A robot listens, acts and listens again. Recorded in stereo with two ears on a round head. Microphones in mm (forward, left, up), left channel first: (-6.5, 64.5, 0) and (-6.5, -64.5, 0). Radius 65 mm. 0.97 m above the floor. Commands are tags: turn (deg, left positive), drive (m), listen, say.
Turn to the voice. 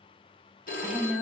<turn deg="-30"/>
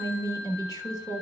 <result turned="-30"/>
<turn deg="25"/>
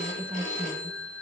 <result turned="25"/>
<turn deg="-15"/>
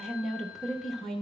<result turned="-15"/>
<say>Facing the woman speaking.</say>